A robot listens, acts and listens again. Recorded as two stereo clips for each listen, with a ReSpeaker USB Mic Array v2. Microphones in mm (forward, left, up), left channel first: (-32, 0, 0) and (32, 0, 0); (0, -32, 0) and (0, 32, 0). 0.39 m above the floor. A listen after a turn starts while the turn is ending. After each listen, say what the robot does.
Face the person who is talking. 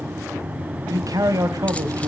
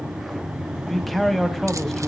Facing the man speaking.